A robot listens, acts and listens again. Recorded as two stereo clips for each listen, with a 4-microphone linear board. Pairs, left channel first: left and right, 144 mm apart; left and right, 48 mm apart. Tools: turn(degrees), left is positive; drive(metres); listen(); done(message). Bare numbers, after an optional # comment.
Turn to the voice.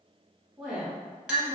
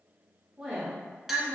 turn(-30)
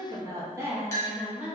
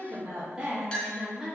turn(-30)
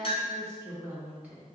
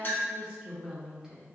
turn(-30)
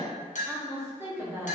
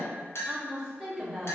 turn(-30)
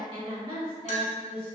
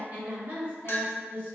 # So it is at 140° right.
turn(-140)
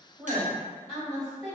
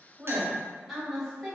done("Facing the woman speaking.")